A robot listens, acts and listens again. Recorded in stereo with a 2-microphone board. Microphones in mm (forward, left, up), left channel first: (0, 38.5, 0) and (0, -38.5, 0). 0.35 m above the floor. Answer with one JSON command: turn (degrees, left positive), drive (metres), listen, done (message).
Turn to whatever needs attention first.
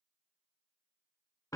{"listen": true}
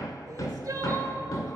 {"turn": -50}
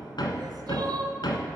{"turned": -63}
{"turn": -65}
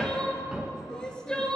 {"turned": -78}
{"turn": 10}
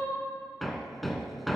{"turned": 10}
{"listen": true}
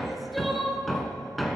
{"done": "Found it: crying, straight ahead."}